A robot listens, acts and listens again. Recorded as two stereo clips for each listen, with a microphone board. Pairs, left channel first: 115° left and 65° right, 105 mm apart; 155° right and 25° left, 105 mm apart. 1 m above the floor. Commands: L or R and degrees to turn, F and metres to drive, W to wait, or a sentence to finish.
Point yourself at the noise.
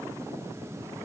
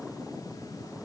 W
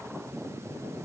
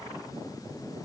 W
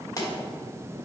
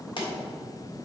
L170
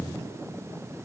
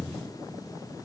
Facing where the pop came from. I can't hear it now.